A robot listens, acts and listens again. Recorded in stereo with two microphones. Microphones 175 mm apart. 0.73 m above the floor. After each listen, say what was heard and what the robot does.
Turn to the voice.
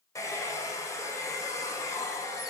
Keep listening.
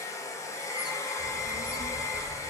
The child speaking: about 70° right or 110° right. Turn 70° right.
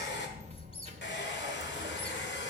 So it is at 40° right. Turn 40° right.
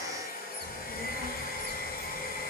Facing the child speaking.